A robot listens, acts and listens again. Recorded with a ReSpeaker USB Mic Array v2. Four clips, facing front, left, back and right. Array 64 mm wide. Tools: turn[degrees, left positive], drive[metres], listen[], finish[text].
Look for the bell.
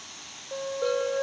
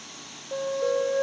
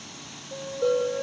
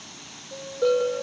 Thought: The bell: 80° right.
Action: turn[-80]
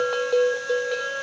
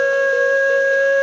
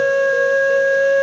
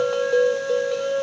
Action: listen[]
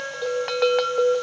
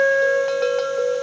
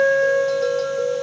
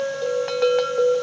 Thought: The bell is now 10° right.
Action: turn[-10]
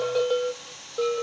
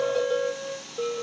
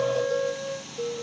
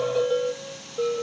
Action: finish[Found it: a bell, straight ahead, 1 to 2 m away.]